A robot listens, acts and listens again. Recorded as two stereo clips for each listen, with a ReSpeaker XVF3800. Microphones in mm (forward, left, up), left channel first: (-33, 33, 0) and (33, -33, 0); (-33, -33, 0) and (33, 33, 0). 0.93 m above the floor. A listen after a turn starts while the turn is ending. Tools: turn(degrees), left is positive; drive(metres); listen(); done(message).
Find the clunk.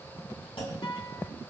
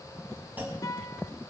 turn(degrees=115)
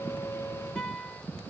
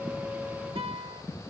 done("Facing where the clunk came from. I can't hear it now.")